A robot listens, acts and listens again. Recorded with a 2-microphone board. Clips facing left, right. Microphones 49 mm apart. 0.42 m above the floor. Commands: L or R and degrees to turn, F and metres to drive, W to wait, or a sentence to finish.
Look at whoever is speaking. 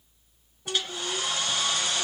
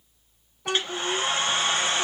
R90
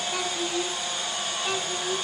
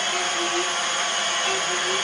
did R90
W
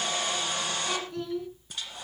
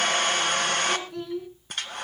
Found it: a child speaking, straight ahead.